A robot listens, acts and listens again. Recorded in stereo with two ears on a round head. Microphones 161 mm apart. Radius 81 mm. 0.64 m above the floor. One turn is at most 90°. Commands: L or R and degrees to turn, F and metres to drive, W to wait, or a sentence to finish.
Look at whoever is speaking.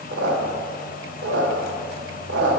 W
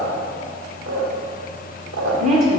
R40
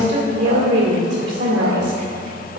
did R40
R90
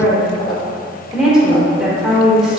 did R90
Found it: a woman speaking, straight ahead.